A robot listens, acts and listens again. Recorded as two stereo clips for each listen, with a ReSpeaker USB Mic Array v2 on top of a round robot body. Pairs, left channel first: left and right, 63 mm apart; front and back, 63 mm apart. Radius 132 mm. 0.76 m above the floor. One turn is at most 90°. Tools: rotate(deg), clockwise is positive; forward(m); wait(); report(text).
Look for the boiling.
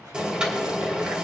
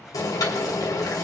rotate(15)
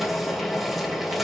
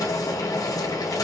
report("Facing the boiling, 2 to 4 m away.")